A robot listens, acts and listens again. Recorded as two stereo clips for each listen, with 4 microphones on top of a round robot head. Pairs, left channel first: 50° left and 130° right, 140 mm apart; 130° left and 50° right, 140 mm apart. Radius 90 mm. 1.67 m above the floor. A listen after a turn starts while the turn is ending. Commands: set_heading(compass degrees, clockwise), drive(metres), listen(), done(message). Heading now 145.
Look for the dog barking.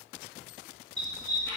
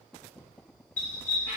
set_heading(335)
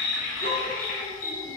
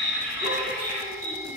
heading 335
set_heading(315)
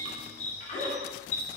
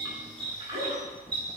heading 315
set_heading(305)
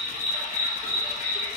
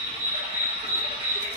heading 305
done("Facing the dog barking.")